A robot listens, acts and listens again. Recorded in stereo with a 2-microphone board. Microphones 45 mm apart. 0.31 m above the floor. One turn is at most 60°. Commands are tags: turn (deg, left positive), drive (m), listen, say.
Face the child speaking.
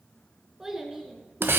<turn deg="-30"/>
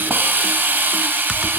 <listen/>
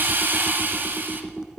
<listen/>
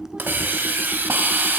<say>I heard a child speaking, but can't make it out now. It was about 25° left or 145° right.</say>